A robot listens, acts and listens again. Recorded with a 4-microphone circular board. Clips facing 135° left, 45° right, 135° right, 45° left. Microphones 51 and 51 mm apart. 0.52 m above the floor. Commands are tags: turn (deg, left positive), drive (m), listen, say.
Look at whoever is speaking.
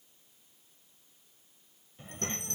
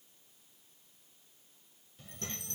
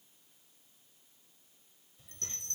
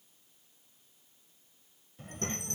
<turn deg="75"/>
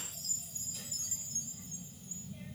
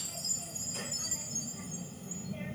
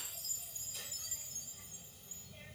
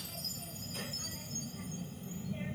<turn deg="-15"/>
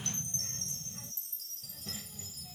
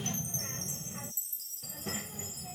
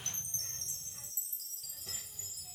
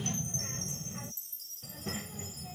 <say>Facing the child speaking.</say>